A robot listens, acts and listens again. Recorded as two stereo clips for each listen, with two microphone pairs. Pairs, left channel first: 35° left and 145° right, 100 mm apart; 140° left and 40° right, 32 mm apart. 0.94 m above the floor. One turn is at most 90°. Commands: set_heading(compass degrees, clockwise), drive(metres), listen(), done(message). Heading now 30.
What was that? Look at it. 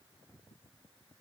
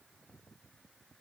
listen()
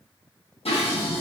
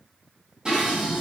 set_heading(5)
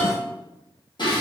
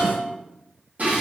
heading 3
done("Found it: dishes clattering, straight ahead, under 1 m away.")